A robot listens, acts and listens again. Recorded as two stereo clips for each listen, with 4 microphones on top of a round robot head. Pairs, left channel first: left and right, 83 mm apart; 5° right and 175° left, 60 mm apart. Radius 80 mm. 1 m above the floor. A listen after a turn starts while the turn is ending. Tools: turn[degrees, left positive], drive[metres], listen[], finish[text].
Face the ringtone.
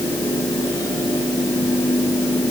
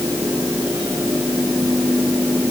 Action: listen[]
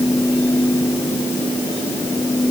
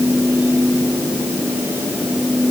Action: listen[]
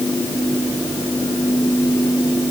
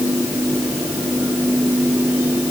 Action: finish[I can't make out a ringtone.]